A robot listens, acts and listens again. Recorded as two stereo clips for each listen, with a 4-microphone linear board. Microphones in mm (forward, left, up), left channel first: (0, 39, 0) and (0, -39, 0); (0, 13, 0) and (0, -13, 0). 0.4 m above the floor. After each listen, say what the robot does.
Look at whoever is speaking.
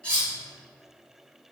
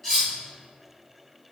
Keep listening.
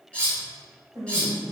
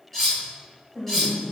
Turn 30° right.
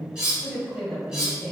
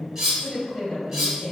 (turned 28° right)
Facing the woman speaking.